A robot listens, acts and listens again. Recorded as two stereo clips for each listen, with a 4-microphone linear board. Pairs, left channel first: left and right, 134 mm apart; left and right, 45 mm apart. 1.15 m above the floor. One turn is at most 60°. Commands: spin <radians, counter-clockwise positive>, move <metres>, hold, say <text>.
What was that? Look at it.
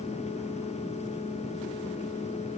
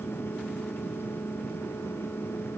hold
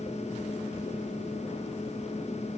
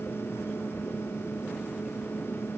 hold
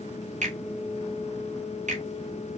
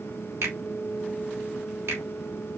spin -1.05
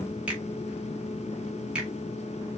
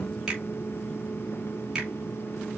say Facing the finger snap, 2 to 4 m away.